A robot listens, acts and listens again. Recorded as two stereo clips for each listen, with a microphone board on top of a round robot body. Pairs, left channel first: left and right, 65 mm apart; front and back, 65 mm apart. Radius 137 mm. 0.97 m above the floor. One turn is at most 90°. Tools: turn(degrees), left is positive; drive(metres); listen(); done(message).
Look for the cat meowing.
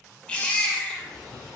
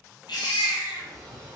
turn(degrees=90)
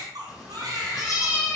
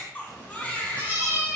turn(degrees=55)
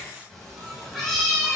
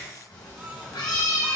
done("Facing the cat meowing.")